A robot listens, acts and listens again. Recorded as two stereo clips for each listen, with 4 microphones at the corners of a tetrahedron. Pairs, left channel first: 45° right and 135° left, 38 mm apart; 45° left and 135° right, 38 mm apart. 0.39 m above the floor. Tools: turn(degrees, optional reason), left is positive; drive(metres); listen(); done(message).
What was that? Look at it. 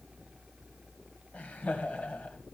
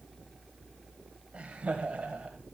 turn(degrees=-80, reason="The laughter: 80° right.")
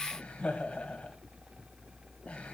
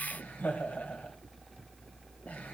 turn(degrees=10, reason="The laughter is now 10° left.")
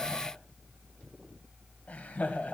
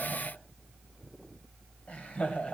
done("Found it: laughter, straight ahead, 2 to 4 m away.")